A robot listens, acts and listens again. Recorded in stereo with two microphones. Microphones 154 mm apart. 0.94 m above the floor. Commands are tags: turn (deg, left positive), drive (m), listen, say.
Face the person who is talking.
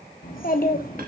<turn deg="65"/>
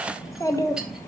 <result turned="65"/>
<turn deg="20"/>
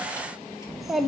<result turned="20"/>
<say>Facing the child speaking, under 1 m away.</say>